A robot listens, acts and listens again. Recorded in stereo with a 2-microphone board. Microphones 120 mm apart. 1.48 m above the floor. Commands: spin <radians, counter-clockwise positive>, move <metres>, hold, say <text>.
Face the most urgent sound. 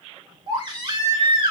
spin -0.70
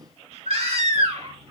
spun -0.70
spin -1.66
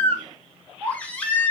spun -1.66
spin 0.26
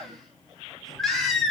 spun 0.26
say Found it: a baby crying, straight ahead.